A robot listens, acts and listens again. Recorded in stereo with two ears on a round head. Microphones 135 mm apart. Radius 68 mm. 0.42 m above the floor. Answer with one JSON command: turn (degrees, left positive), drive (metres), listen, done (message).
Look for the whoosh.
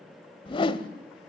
{"turn": 35}
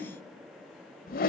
{"turn": 105}
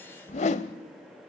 {"turn": 50}
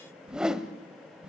{"done": "Found it: a whoosh, straight ahead."}